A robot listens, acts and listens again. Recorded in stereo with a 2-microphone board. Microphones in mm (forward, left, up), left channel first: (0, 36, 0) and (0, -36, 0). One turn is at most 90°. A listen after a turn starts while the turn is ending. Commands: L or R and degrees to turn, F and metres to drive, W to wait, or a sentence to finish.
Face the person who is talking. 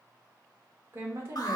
R40
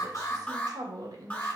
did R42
R90
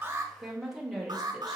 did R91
Facing the woman speaking.